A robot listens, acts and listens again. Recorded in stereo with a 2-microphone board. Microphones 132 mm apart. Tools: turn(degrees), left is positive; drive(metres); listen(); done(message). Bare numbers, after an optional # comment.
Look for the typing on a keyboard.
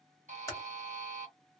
# The typing on a keyboard: about 25° left or 155° left.
turn(25)
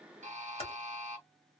# So it is at 130° left.
turn(130)
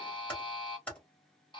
# The typing on a keyboard is now 10° left.
turn(10)
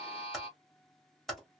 done("Found it: typing on a keyboard, straight ahead.")